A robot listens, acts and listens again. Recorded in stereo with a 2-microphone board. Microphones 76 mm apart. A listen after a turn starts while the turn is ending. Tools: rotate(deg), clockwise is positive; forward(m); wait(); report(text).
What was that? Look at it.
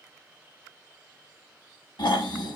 rotate(-90)
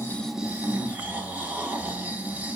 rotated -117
rotate(25)
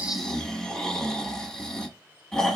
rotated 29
report("Found it: snoring, straight ahead, under 1 m away.")